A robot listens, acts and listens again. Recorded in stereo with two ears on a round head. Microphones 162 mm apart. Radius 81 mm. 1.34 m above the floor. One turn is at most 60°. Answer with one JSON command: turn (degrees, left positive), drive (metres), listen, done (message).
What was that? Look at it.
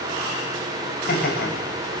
{"turn": 50}
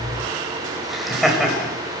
{"done": "Facing the laughter."}